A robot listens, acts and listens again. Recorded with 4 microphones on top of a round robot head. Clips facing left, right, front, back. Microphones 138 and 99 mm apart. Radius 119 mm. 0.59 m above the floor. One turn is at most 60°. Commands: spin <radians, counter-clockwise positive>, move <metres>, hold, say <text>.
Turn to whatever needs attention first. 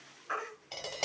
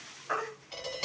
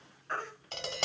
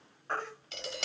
spin -1.05
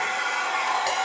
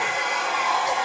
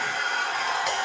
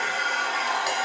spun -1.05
spin -1.05
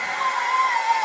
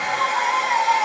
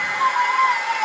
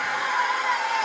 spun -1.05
spin -0.44
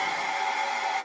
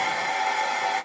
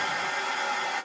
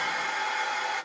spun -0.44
hold
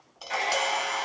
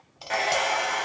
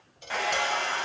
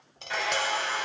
hold
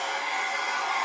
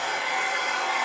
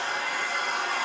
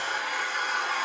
say Facing where the baby crying came from. I can't hear it now.